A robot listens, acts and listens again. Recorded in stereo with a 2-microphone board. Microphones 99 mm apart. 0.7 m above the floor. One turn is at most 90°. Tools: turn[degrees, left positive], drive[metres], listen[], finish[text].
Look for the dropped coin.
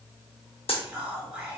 Thought: The dropped coin: about 70° left or 110° left.
Action: turn[70]
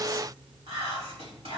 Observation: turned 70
Action: listen[]
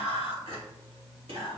Action: finish[I heard a dropped coin, but can't make it out now. It was about straight ahead or 40° left.]